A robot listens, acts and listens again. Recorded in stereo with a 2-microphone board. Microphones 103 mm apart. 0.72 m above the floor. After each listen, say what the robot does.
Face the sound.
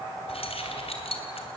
Turn 70° left.
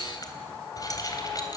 Turn 35° left.
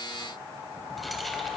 Keep listening.
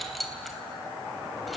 Facing the keys jangling, 2 to 4 m away.